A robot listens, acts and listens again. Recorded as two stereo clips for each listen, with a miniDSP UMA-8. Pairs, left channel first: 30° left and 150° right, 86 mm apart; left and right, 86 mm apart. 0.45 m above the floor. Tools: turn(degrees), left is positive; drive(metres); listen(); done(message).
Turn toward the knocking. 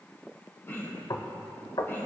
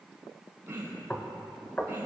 turn(degrees=20)
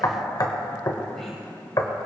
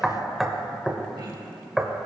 done("Found it: knocking, straight ahead, 1 to 2 m away.")